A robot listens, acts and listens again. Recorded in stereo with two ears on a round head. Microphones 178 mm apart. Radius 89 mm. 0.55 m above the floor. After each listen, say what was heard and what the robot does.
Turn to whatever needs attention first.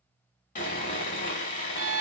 Keep listening.
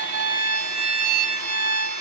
Keep listening.
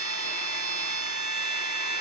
I can't make out anything urgent, only a violin and sawing.